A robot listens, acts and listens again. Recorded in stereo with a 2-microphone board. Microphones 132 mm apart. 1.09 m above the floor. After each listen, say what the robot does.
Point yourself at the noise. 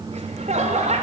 Turn 60° right.
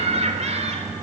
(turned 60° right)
Turn 60° right.
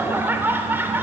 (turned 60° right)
Turn 15° right.
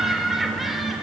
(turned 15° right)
Found it: laughter, straight ahead.